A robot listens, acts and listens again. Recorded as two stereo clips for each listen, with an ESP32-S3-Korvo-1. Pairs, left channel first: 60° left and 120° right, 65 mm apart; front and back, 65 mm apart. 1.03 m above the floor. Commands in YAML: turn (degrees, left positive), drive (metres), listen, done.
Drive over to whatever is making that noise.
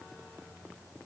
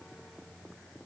listen: true
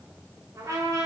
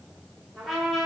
turn: -90
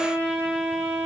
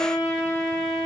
drive: 1.0
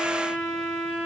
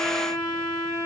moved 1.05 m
turn: -10
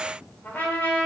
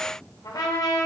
drive: 1.0
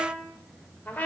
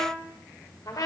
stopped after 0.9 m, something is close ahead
done: "Arrived at the trumpet, straight ahead."